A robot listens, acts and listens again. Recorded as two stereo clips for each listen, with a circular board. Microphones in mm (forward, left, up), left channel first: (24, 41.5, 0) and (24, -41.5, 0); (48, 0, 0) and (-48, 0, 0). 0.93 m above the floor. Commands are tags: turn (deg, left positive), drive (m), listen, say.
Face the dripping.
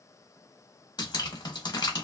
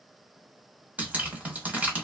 <turn deg="105"/>
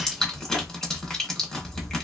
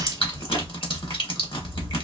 <turn deg="10"/>
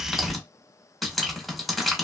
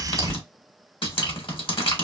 <say>Found it: dripping, straight ahead.</say>